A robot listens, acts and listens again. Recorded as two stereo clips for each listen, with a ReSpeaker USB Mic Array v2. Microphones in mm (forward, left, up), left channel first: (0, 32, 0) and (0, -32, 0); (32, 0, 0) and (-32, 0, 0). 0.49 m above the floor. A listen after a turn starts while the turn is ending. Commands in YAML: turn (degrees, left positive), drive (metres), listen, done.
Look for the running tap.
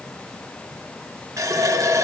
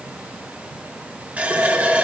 turn: -115
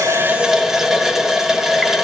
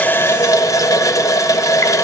done: "Facing the running tap, 1 to 2 m away."